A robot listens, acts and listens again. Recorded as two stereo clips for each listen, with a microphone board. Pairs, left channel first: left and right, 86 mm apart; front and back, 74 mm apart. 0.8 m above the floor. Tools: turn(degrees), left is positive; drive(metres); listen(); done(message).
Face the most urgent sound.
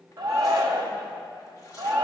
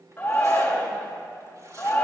turn(degrees=-65)
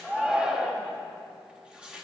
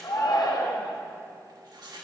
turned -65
turn(degrees=-10)
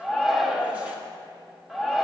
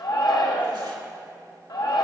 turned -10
done("Facing the shout, 1 to 2 m away.")